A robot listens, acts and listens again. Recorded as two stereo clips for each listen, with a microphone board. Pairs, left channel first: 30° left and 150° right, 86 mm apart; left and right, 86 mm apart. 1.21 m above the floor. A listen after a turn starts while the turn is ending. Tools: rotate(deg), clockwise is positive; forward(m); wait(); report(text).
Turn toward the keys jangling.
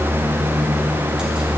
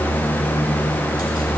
wait()
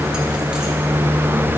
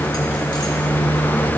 wait()
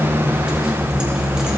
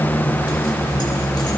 report("I can't make out keys jangling.")